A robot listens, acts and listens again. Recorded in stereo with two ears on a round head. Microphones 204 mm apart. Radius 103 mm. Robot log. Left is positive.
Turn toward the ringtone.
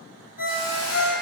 note: The ringtone: about 75° left or 105° left.
cmd yaw +75
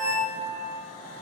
note: So it is at 15° left.
cmd yaw +15
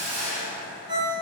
end: Found it: a ringtone, straight ahead.